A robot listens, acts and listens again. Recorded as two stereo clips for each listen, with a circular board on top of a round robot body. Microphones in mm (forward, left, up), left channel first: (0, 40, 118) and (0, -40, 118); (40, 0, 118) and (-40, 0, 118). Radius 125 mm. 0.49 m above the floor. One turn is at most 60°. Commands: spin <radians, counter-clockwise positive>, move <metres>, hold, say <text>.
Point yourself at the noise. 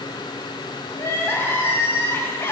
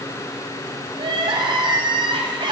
spin 1.05
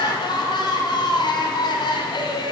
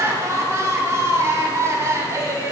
spin 1.05
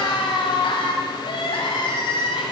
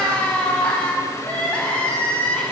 spin 1.05
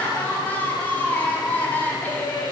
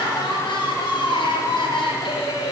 spin 0.35
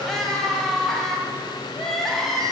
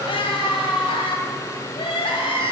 say Found it: crying, straight ahead.